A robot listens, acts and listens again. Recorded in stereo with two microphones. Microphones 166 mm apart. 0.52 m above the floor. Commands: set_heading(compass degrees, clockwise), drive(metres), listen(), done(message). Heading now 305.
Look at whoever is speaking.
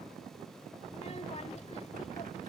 set_heading(260)
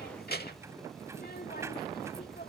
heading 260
set_heading(170)
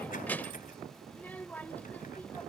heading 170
set_heading(160)
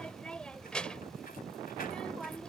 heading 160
done("Facing the child speaking.")